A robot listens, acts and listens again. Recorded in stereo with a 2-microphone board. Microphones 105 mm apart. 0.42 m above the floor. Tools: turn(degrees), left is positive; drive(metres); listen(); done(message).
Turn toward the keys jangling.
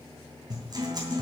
listen()
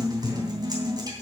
listen()
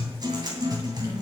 done("I can't make out keys jangling to turn to.")